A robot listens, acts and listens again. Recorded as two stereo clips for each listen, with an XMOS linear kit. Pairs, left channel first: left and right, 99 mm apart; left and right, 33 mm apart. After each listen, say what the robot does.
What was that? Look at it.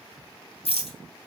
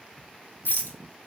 Turn 90° left.
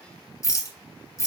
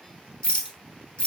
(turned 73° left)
Turn 30° left.
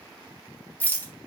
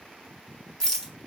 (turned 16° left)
Turn 15° left.
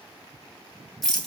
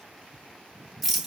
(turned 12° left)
Found it: a rattle, straight ahead.